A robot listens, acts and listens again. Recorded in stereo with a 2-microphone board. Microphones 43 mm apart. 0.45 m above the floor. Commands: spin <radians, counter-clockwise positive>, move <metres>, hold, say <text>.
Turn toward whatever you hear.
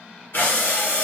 spin 0.96
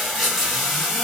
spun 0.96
say Facing the breathing.